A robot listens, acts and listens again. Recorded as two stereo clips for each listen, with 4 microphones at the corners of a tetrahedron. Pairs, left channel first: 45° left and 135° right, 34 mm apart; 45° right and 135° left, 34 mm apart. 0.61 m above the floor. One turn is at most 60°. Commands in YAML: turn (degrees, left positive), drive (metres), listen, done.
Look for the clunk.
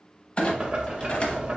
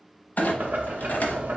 turn: -10
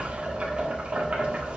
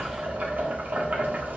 done: "Facing where the clunk came from. I can't hear it now."